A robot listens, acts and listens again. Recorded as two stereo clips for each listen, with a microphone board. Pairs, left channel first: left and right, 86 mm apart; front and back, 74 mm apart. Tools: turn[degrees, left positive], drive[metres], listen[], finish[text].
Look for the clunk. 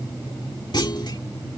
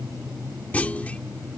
Thought: The clunk: 70° left.
Action: turn[70]
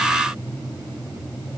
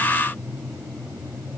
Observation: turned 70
Action: finish[Facing where the clunk came from. I can't hear it now.]